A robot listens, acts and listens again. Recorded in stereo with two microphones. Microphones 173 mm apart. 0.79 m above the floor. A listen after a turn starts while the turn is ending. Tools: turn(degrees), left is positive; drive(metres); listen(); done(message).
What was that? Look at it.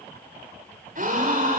turn(degrees=-55)
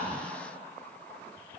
listen()
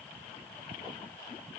done("I heard a gasp, but can't make it out now. It was about straight ahead or 70° right.")